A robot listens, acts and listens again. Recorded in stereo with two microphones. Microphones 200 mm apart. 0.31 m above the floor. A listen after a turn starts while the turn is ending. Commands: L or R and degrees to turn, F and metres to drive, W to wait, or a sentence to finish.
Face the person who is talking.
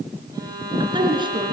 R25
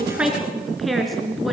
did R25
Found it: a woman speaking, straight ahead, 2 to 4 m away.